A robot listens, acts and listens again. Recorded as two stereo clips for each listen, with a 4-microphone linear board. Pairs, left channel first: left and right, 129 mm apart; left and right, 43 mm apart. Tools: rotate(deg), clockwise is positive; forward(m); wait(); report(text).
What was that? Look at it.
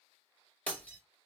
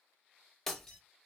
rotate(-30)
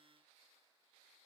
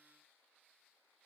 wait()
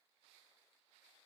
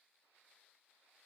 report("I heard breaking glass, but can't make it out now. It was about 20° right or 140° left.")